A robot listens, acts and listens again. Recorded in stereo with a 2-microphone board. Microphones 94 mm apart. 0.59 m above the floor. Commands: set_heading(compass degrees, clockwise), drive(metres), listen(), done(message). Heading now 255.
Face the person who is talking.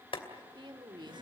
set_heading(310)
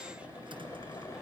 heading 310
listen()
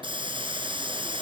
listen()
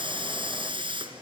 done("I heard a woman speaking, but can't make it out now. It was about straight ahead or 70° right.")